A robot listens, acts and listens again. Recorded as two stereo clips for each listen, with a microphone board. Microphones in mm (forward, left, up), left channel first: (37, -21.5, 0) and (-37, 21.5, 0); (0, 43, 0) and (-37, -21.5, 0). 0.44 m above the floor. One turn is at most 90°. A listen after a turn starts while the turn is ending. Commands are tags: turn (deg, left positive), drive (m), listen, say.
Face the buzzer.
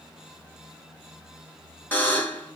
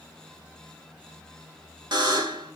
<turn deg="-90"/>
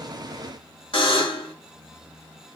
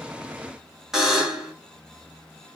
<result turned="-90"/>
<turn deg="-35"/>
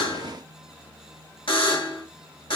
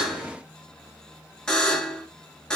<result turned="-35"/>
<turn deg="-20"/>
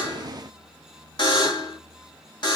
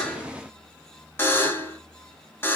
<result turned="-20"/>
<say>Facing the buzzer.</say>